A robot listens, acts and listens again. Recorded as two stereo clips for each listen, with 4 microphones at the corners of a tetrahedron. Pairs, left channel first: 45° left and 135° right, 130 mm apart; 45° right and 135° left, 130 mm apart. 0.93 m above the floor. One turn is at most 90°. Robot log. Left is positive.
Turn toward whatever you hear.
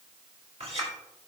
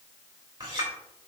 note: The clink: 170° right.
cmd yaw -90
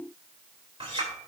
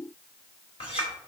note: The clink is now 90° right.
cmd yaw -90
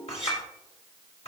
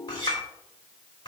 note: The clink is now 10° left.
cmd yaw +10
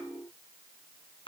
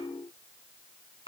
end: Facing the clink.